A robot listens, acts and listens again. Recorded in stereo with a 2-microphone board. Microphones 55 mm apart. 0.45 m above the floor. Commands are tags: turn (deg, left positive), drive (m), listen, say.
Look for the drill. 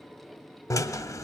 <turn deg="90"/>
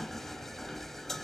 <say>Found it: a drill, straight ahead, 1 to 2 m away.</say>